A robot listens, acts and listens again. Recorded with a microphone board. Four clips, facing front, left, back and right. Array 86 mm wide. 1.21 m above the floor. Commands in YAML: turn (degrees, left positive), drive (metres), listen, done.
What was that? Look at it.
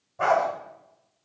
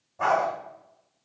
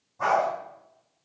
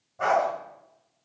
turn: -10
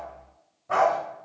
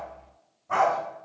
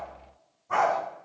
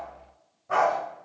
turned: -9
turn: -25
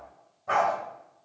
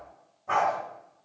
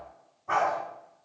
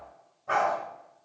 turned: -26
turn: -15
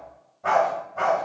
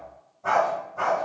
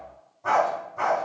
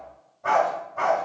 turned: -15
turn: -20
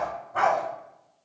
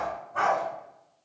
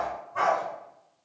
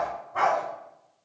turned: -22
done: "Found it: a dog barking, straight ahead."